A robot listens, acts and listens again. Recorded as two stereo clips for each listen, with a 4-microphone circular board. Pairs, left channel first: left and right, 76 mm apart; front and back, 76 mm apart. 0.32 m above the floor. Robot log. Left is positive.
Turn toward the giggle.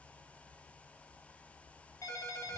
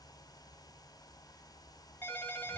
cmd idle
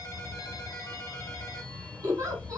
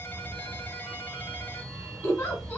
note: The giggle: 55° right.
cmd yaw -55
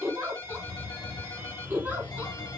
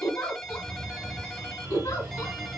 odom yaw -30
note: The giggle is now 25° right.
cmd yaw -25
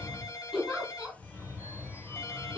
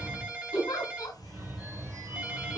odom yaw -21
end: Found it: a giggle, straight ahead, 1 to 2 m away.